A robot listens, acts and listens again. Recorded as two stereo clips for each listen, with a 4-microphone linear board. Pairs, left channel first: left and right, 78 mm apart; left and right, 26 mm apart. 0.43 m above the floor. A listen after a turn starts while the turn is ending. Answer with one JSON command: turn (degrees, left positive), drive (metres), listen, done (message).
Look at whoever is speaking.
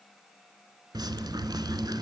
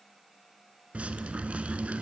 {"listen": true}
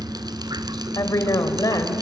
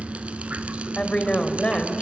{"turn": 50}
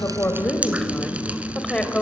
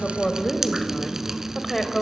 {"turn": 10}
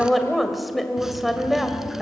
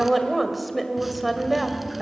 {"done": "Found it: a woman speaking, straight ahead, 2 to 4 m away."}